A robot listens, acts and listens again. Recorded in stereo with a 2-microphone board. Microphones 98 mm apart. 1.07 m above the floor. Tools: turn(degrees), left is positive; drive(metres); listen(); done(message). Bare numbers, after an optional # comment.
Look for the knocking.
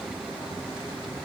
listen()
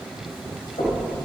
turn(90)
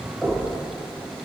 # So it is at 10° left.
turn(10)
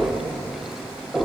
done("Found it: knocking, straight ahead.")